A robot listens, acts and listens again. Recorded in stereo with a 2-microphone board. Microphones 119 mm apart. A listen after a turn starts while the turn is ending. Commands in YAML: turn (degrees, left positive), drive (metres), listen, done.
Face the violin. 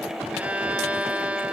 turn: -30
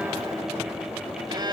turn: -140
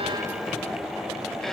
listen: true
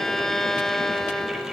done: "Found it: a violin, straight ahead."